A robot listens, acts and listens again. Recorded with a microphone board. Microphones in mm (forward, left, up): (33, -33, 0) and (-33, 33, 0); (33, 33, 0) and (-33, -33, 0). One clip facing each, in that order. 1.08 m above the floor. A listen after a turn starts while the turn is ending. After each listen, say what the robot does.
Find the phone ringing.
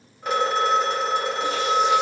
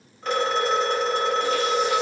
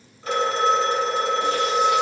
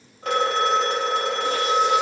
Turn 125° right.
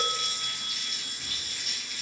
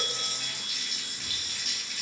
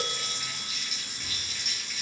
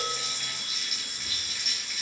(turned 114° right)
Turn 10° right.
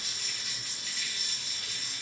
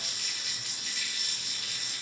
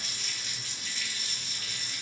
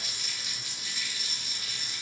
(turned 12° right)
Keep listening.
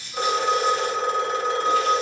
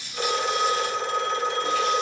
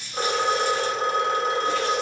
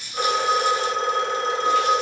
Facing the phone ringing.